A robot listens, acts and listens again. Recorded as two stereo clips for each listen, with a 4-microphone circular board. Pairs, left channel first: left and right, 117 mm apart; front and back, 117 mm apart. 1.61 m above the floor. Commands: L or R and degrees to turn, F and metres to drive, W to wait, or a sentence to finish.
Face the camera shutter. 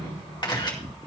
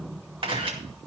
L140
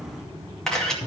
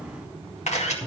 Facing the camera shutter, 2 to 4 m away.